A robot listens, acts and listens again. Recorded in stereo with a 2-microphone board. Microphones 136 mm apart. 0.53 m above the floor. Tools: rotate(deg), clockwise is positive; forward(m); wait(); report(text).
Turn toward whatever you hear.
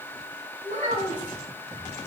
rotate(90)
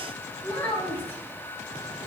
rotate(-15)
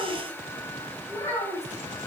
rotate(-20)
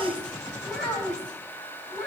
report("Facing the child speaking.")